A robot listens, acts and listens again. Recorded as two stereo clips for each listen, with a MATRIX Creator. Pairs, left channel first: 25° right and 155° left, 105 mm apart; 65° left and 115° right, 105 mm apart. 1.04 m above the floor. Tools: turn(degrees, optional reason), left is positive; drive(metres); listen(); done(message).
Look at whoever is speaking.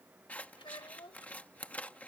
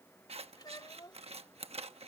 turn(degrees=15, reason="The child speaking: 15° left.")
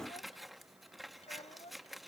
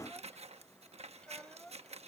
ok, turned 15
turn(degrees=-15, reason="The child speaking is now 15° right.")
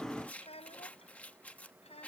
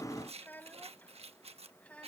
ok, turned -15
turn(degrees=-10, reason="The child speaking is now 10° right.")
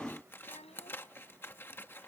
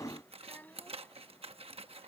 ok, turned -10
done("Facing the child speaking.")